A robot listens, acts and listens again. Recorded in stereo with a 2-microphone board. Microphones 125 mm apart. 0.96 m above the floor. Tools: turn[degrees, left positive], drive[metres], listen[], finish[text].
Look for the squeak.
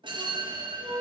Thought: The squeak: about 60° right or 120° right.
Action: turn[-60]
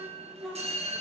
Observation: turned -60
Action: finish[Found it: a squeak, straight ahead, 2 to 4 m away.]